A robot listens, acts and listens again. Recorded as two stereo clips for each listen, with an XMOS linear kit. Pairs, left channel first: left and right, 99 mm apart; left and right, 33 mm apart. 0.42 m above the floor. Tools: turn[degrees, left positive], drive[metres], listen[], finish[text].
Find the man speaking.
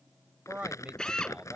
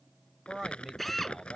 Action: turn[-30]
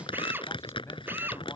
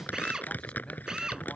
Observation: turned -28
Action: listen[]
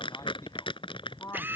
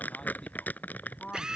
Thought: So it is at 35° left.
Action: turn[35]
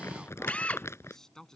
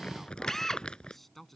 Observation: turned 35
Action: finish[Facing the man speaking.]